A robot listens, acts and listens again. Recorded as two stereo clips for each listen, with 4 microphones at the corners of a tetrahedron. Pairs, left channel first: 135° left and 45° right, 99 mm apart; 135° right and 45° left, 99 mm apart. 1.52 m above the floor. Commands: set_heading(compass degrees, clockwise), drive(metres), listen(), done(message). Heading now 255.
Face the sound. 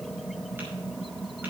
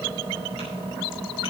listen()
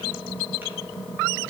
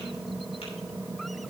listen()
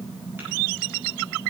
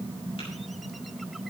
done("I can't make out anything.")